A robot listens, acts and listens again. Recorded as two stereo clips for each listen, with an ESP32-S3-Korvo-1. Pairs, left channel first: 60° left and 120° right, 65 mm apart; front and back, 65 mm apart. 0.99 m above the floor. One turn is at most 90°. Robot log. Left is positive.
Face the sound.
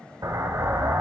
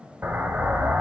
note: The explosion: 125° right.
cmd yaw -90
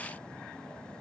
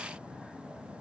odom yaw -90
note: Nothing new. It was at 35° right.
cmd yaw -35
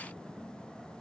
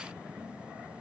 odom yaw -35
end: I heard an explosion from this way, but can't make it out now.